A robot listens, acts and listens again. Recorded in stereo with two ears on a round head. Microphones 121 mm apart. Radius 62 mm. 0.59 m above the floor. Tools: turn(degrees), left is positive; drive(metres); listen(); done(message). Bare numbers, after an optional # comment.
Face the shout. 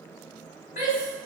# The shout: about 60° left or 120° left.
turn(60)
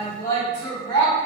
# So it is at 35° left.
turn(35)
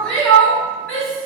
# The shout is now 10° left.
turn(10)
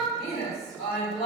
done("Found it: a shout, straight ahead, 1 to 2 m away.")